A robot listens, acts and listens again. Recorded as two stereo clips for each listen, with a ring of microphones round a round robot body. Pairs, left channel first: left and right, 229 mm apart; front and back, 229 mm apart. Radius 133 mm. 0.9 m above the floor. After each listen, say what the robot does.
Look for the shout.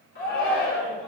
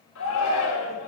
Turn 35° left.
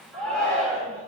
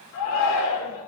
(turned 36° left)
Facing the shout.